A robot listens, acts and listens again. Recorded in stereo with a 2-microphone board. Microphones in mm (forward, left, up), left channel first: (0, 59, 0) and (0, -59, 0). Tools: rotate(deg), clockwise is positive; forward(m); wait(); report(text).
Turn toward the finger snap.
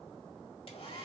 wait()
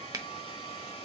rotate(25)
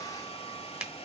rotate(10)
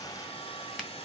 wait()
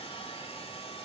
wait()
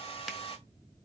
report("I heard a finger snap from this way, but can't make it out now.")